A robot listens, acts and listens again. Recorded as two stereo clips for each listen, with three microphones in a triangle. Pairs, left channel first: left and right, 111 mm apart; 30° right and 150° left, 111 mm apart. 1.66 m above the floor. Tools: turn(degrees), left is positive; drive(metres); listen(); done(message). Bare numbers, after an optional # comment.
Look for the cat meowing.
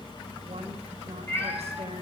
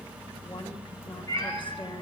# The cat meowing: 25° left.
turn(25)
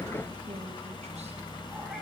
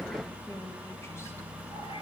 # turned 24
listen()
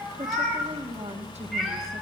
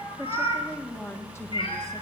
done("Found it: a cat meowing, straight ahead.")